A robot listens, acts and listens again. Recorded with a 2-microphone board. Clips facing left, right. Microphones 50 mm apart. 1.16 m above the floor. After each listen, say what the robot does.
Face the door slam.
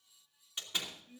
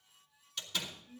Turn 20° left.
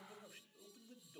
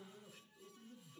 Keep listening.
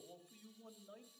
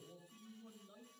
I heard a door slam, but can't make it out now. It was about straight ahead or 140° left.